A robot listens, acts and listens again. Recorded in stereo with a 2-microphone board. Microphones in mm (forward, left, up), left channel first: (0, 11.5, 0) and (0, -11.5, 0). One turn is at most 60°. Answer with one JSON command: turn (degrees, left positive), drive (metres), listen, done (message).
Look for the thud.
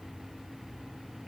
{"listen": true}
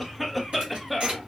{"turn": -60}
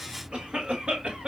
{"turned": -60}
{"turn": -30}
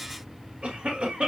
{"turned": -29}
{"done": "Facing where the thud came from. I can't hear it now."}